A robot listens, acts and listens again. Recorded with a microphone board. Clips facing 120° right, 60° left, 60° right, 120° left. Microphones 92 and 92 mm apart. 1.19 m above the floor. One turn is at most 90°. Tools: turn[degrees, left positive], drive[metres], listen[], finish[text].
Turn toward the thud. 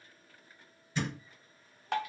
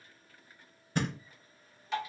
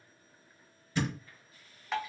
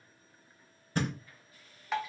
Thought: The thud: 90° left.
Action: turn[90]
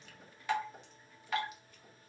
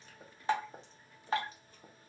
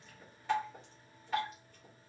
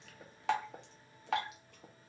Action: finish[Facing where the thud came from. I can't hear it now.]